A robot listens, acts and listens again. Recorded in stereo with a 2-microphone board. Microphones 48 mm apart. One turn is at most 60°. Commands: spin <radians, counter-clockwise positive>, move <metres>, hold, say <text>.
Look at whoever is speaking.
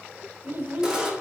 spin -0.87
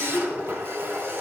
say Found it: a child speaking, straight ahead, 1 to 2 m away.